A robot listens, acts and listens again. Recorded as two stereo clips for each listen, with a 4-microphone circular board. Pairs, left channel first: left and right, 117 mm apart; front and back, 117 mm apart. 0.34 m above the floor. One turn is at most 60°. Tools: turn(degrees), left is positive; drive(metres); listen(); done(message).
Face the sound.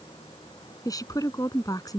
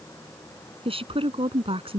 turn(degrees=60)
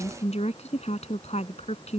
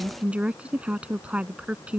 turn(degrees=60)
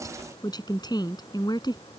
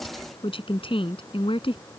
turn(degrees=40)
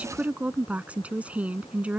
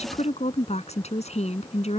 turn(degrees=-10)
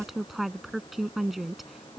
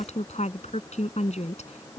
done("Found it: a woman speaking, straight ahead.")